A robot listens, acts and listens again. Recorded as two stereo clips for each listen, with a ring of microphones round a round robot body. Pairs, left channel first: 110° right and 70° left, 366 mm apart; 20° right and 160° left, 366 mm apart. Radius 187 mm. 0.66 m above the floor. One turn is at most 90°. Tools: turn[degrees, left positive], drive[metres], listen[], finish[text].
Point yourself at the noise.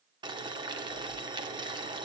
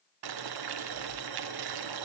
Thought: The boiling: 145° left.
Action: turn[90]
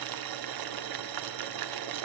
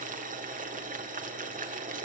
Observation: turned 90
Thought: The boiling is now 90° left.
Action: turn[90]
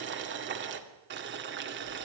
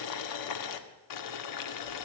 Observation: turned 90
Thought: The boiling is now 10° left.
Action: turn[10]
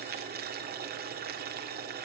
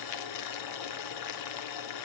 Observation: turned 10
Action: finish[Found it: boiling, straight ahead.]